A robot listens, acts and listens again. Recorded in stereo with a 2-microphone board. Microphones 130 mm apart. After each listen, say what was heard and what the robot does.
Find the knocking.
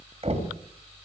The knocking: about 50° right or 130° right. Turn 50° right.
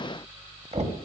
So it is at 70° right. Turn 70° right.
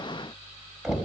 Facing the knocking.